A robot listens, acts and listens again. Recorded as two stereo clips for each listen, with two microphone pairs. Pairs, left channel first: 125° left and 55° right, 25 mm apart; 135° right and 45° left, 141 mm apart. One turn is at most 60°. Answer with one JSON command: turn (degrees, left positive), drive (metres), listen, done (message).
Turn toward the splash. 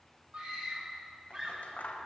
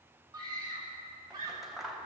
{"listen": true}
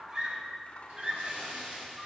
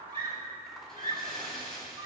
{"turn": -50}
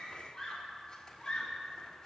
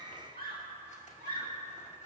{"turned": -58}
{"turn": 10}
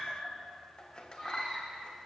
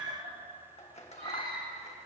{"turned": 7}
{"done": "Facing where the splash came from. I can't hear it now."}